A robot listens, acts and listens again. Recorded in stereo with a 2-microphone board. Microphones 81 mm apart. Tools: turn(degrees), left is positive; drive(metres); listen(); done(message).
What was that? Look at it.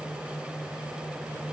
listen()
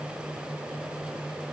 listen()
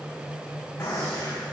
turn(degrees=30)
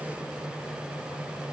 listen()
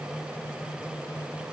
done("I heard a gunshot, but can't make it out now. It was about straight ahead or 120° left.")